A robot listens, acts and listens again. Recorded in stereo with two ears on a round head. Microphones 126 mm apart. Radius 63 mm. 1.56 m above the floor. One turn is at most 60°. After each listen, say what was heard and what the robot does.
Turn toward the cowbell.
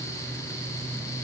Keep listening.
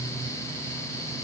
Keep listening.
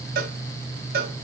The cowbell: about 70° right or 110° right. Turn 60° right.
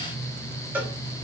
So it is at 10° right. Turn 10° right.
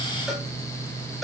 Facing the cowbell, under 1 m away.